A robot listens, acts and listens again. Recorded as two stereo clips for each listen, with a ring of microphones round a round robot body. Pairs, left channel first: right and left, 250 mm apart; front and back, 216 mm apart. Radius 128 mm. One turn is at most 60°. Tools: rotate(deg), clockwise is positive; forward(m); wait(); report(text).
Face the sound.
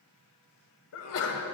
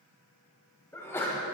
rotate(60)
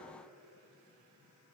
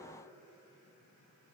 rotate(20)
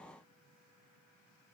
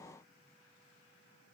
report("I heard a sneeze from this way, but can't make it out now.")